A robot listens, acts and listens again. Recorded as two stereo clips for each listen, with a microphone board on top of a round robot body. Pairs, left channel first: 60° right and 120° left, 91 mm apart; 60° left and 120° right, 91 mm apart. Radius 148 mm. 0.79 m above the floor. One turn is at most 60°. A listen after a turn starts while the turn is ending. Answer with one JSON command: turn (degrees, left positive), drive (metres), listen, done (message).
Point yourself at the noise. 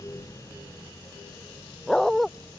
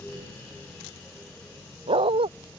{"turn": -60}
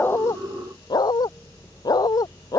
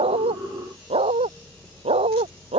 {"turn": -60}
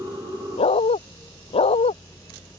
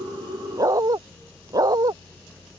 {"turn": -60}
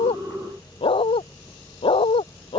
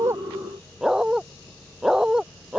{"turn": -35}
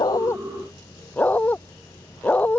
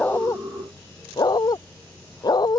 {"turn": 15}
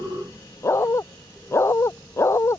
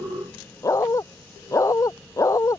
{"done": "Facing the dog barking."}